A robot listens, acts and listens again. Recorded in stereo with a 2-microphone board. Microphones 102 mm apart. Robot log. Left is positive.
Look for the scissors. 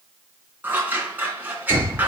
note: The scissors: about 20° right or 160° right.
cmd yaw -20
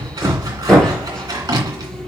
note: So it is at 140° right.
cmd yaw -140
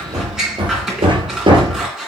end: Found it: scissors, straight ahead, 2 to 4 m away.